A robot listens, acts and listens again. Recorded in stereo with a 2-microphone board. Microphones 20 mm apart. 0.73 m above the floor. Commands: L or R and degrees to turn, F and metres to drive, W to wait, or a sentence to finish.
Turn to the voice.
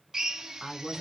L15
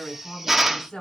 L145
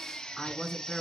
Facing the woman speaking, over 4 m away.